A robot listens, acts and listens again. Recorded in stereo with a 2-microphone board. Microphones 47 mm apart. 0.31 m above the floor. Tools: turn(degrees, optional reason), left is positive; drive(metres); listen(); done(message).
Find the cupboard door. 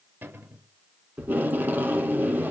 turn(degrees=-50, reason="The cupboard door: about 50° right or 130° right.")
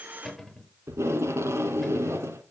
done("Facing the cupboard door.")